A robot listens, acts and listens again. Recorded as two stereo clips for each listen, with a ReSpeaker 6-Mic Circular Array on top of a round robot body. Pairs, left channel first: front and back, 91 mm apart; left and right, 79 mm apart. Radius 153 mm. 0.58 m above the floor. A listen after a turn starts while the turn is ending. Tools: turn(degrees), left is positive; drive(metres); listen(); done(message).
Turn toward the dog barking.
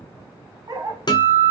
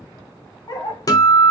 turn(degrees=125)
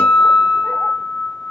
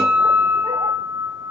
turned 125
listen()
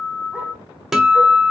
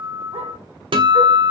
listen()
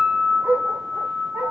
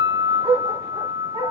turn(degrees=-115)
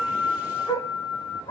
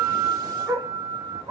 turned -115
turn(degrees=-30)
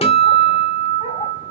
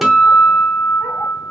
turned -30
listen()
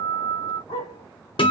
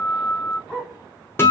done("Facing the dog barking.")